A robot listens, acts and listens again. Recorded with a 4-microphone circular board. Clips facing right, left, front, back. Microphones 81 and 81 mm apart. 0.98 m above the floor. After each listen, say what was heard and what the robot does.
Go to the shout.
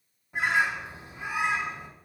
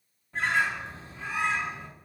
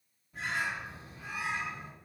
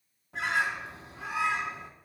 Keep listening.
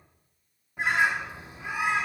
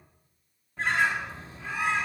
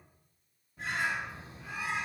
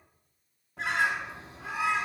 Keep listening.
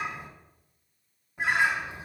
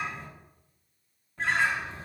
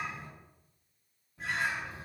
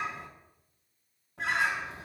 I can't make out a shout to turn to.